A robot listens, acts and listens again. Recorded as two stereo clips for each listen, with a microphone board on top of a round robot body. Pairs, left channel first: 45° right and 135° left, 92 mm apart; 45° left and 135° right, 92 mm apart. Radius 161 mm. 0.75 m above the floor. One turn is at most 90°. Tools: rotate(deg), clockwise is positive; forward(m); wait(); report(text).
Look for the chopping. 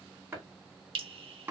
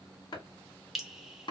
rotate(-70)
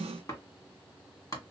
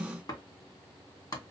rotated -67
report("Found it: chopping, straight ahead, 1 to 2 m away.")